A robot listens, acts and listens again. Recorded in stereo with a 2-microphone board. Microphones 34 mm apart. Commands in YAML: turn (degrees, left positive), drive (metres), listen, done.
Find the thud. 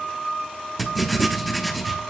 listen: true
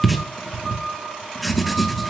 listen: true
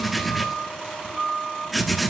done: "I can't make out a thud to turn to."